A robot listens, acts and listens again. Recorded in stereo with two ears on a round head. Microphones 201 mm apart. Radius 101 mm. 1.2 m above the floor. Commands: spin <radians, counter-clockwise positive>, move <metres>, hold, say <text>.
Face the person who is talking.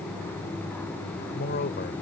spin 0.70
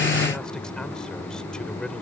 hold
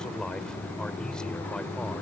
say Facing the man speaking.